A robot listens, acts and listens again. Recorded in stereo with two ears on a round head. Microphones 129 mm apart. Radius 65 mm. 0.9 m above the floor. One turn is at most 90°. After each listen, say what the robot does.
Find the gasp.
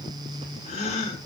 Turn 50° left.
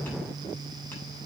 Keep listening.
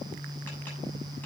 I heard a gasp, but can't make it out now. It was about straight ahead or 80° left.